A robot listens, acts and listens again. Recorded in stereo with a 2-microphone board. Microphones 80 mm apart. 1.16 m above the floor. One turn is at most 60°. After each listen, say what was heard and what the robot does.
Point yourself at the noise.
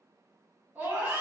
The scream: about 20° right or 160° right. Turn 20° right.
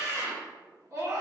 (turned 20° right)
So it is at 140° right. Turn 60° right.
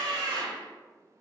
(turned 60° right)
The scream is now 105° right. Turn 60° right.
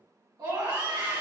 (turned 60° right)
The scream is now 65° right. Turn 60° right.
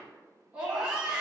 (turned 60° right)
The scream is now 20° right. Turn 20° right.
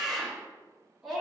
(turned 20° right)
Found it: a scream, straight ahead, 1 to 2 m away.